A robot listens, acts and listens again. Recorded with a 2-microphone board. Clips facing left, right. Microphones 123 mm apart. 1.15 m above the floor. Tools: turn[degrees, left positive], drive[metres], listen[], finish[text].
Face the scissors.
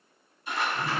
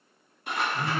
Thought: The scissors: about 65° right or 115° right.
Action: turn[-65]
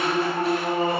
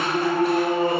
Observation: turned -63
Action: listen[]
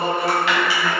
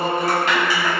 Thought: So it is at 45° right.
Action: turn[-45]
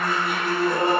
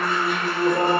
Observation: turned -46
Action: listen[]
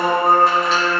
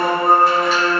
Action: listen[]
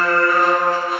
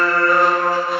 Action: finish[Facing where the scissors came from. I can't hear it now.]